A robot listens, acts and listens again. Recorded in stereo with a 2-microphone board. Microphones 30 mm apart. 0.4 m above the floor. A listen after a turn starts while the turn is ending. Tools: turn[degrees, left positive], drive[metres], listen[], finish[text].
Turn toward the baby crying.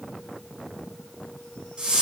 Action: listen[]
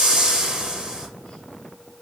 Action: listen[]
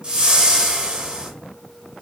Action: finish[I can't make out a baby crying, only a whoosh.]